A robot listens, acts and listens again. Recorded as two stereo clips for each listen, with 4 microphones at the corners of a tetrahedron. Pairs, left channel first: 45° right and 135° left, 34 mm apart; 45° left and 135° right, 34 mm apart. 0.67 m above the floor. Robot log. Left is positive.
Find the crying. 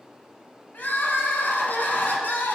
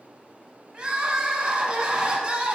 note: The crying: 80° right.
cmd yaw -80
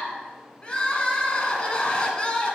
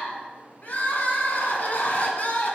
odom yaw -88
note: The crying is now 10° left.
cmd yaw +10
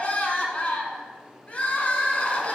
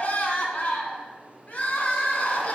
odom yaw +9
end: Facing the crying.